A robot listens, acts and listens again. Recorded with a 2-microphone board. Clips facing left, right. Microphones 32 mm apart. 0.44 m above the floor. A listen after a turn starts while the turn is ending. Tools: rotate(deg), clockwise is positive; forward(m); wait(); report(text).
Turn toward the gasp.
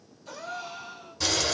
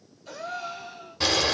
rotate(30)
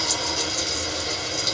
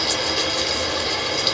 wait()
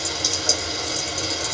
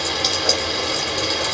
report("I heard a gasp, but can't make it out now. It was about 20° left or 140° right.")